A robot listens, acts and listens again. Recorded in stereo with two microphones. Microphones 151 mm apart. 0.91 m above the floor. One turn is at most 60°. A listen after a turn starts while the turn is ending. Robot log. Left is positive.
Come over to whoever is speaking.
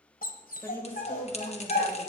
note: The woman speaking: about 15° left or 165° left.
cmd yaw +15
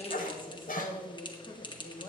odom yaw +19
note: So it is at 145° left.
cmd yaw +60
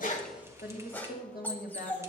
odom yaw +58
note: The woman speaking is now 85° left.
cmd yaw +60
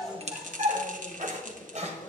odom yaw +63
note: Nothing new. It was at 25° left.
cmd yaw +25
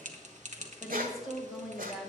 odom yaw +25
cmd fwd 1.0
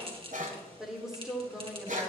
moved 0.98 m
cmd fwd 1.0
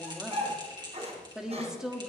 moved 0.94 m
cmd fwd 1.0
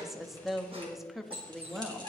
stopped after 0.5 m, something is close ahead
end: I am next to the woman speaking.